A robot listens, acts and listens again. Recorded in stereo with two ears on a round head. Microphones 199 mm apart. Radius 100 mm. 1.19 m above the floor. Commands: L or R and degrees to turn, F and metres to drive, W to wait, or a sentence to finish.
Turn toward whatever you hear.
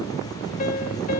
L35
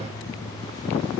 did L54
W
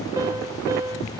R15
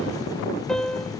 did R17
Found it: a piano, straight ahead.